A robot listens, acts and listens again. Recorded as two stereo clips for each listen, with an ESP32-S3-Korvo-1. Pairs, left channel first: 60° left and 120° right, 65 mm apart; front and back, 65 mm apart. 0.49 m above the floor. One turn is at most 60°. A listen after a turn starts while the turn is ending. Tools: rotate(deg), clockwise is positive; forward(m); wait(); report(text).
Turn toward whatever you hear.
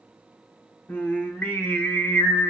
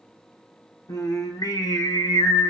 report("Found it: singing, straight ahead.")